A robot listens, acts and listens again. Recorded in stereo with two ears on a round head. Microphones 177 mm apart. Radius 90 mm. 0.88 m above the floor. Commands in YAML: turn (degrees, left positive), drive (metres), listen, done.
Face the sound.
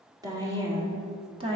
turn: -30
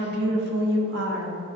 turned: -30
turn: -110
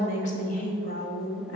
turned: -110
turn: 55
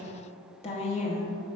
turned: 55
turn: 40
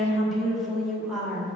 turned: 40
done: "Found it: a woman speaking, straight ahead."